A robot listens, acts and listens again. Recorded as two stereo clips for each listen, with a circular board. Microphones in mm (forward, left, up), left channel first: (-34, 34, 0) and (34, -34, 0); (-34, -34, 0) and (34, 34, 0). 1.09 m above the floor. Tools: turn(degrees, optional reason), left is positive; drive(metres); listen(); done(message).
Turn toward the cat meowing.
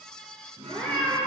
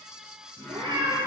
turn(degrees=55, reason="The cat meowing: 55° left.")
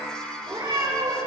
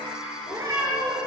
turn(degrees=-15, reason="The cat meowing is now 15° right.")
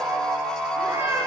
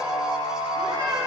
done("Facing the cat meowing.")